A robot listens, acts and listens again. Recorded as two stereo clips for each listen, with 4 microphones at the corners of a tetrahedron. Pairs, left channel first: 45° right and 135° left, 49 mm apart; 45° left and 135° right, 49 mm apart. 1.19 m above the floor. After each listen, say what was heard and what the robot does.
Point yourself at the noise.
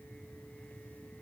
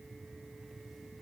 Keep listening.
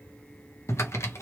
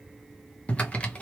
The typing on a keyboard: 20° right. Turn 20° right.
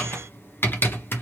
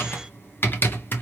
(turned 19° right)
Found it: typing on a keyboard, straight ahead.